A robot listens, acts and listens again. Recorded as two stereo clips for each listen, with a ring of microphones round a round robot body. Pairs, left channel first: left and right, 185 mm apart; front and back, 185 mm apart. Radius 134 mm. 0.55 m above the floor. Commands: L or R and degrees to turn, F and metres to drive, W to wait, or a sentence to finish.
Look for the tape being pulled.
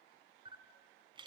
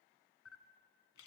W
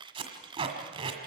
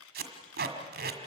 R155
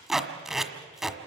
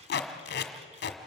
Facing the tape being pulled, 1 to 2 m away.